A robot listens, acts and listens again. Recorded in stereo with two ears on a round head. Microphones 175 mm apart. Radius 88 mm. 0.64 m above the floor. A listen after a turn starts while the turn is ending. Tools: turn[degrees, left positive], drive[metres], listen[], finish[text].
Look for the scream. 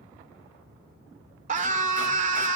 Thought: The scream: about 40° right or 140° right.
Action: turn[-40]
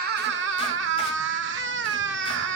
Thought: So it is at 95° right.
Action: turn[-95]
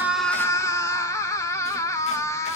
Thought: The scream is now 20° left.
Action: turn[20]
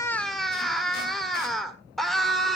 Action: finish[Found it: a scream, straight ahead, 1 to 2 m away.]